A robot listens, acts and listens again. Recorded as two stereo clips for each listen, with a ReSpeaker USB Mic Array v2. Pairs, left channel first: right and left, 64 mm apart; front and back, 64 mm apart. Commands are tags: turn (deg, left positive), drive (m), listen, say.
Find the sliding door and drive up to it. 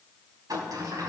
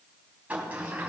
<turn deg="110"/>
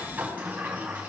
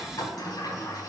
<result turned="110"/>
<turn deg="20"/>
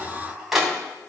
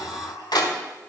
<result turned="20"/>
<drive m="1.0"/>
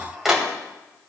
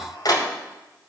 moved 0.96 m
<drive m="1.0"/>
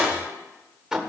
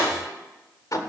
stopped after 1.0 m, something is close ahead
<turn deg="10"/>
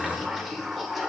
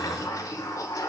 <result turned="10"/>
<say>Arrived at the sliding door, straight ahead.</say>